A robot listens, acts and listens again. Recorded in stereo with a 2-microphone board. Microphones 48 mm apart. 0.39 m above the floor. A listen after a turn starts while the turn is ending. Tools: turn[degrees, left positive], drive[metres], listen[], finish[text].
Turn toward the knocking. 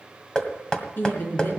Thought: The knocking: about 15° left or 165° left.
Action: turn[15]
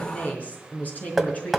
Action: finish[Found it: knocking, straight ahead, 1 to 2 m away.]